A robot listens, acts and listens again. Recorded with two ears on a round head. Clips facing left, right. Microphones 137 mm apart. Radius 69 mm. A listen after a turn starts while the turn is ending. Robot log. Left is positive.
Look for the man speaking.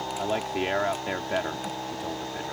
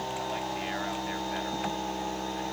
cmd yaw +90
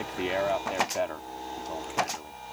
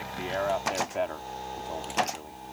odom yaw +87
end: Facing the man speaking.